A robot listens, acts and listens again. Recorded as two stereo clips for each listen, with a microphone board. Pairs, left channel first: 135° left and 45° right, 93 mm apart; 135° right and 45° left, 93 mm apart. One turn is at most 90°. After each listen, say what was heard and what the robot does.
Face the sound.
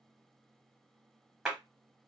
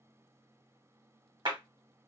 The clap: 35° left. Turn 35° left.
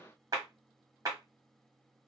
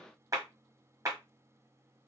Found it: a clap, straight ahead.